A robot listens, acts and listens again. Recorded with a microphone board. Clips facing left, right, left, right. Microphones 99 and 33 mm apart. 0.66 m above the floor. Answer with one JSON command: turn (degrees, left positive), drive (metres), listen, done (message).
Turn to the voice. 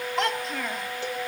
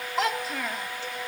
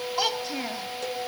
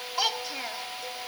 {"turn": -30}
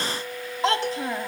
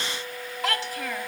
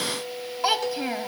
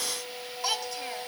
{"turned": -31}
{"turn": 25}
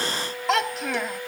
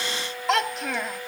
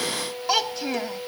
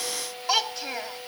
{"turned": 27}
{"done": "Found it: a child speaking, straight ahead."}